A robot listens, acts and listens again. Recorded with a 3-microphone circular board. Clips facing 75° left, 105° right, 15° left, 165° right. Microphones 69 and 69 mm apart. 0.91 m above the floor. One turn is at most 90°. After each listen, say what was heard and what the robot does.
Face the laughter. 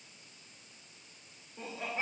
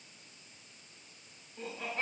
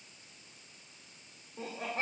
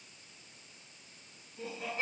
Found it: laughter, straight ahead.